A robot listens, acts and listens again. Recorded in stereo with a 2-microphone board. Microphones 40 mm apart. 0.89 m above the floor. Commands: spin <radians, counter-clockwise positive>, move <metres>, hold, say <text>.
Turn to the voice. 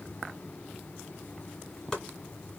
hold
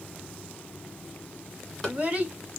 spin -0.52
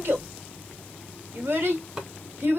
spin -2.09
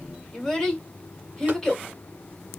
spin 0.17
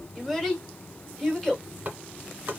say Facing the child speaking.